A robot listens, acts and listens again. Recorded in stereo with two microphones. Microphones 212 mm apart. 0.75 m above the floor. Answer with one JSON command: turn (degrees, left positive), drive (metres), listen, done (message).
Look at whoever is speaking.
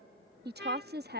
{"turn": -50}
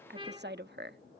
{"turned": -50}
{"turn": -70}
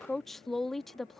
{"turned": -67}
{"done": "Found it: a woman speaking, straight ahead."}